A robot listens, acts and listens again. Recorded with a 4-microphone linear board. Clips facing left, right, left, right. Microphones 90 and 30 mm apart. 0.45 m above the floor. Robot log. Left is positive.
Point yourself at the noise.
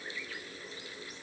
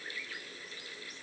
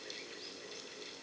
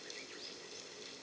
cmd idle
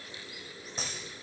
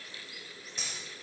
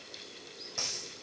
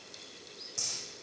note: The dropped coin: about 35° left or 145° left.
cmd yaw +35
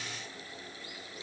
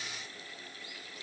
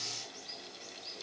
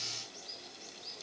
cmd idle
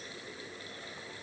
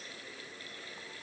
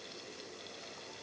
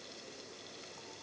end: I heard a dropped coin, but can't make it out now. It was about straight ahead or 110° left.